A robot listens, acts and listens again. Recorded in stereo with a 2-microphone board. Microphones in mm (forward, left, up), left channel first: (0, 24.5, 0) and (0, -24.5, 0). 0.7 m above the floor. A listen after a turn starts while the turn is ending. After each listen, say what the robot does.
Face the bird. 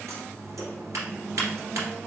Keep listening.
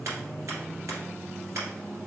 Keep listening.
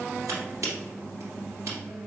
I can't make out a bird to turn to.